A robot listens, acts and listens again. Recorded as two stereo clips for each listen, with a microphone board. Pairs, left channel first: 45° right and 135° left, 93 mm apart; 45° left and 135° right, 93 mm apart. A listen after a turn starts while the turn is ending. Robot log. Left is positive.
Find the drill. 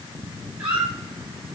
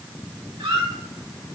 cmd idle
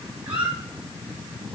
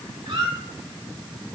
cmd idle
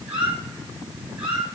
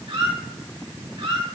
end: I can't make out a drill, only a squeak.